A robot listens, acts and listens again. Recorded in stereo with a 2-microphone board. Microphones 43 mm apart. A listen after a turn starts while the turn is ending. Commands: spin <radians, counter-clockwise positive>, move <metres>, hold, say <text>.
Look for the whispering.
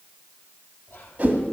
spin 1.05
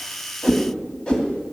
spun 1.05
hold
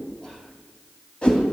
hold
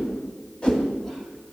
say I heard whispering, but can't make it out now. It was about straight ahead or 60° left.